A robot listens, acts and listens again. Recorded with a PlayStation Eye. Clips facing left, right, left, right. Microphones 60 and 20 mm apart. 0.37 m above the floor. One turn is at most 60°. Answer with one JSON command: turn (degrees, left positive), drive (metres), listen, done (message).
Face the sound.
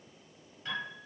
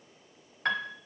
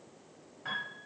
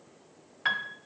{"turn": -60}
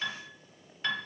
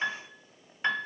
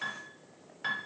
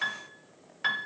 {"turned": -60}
{"turn": -30}
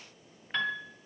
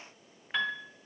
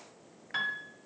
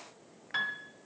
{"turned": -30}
{"done": "Facing the piano."}